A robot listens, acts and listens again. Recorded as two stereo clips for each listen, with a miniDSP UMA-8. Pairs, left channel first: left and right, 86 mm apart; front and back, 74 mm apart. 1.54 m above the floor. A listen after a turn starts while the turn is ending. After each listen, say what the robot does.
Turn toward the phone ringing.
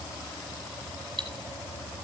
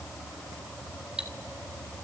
Keep listening.
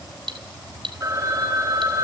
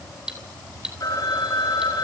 Turn 40° right.
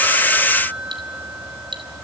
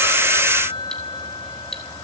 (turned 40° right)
Turn 20° right.
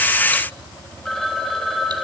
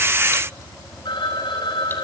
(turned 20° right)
Facing the phone ringing, over 4 m away.